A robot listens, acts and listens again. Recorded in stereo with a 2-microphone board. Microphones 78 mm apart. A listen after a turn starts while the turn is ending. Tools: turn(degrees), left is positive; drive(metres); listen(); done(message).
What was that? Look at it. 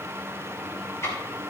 turn(degrees=40)
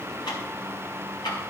turn(degrees=95)
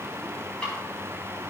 turn(degrees=15)
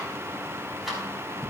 done("Found it: ticking, straight ahead, over 4 m away.")